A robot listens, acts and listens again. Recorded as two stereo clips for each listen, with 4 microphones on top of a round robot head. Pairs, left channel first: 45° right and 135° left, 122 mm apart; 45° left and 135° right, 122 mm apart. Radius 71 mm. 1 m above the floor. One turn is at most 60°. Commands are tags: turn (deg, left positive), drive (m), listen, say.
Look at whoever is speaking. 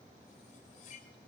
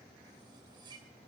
<listen/>
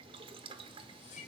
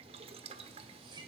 <listen/>
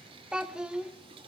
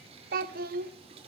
<turn deg="-60"/>
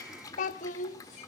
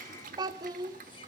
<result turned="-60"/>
<turn deg="-60"/>
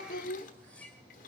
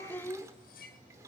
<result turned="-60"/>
<turn deg="-30"/>
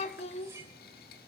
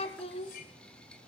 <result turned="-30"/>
<say>Found it: a child speaking, straight ahead.</say>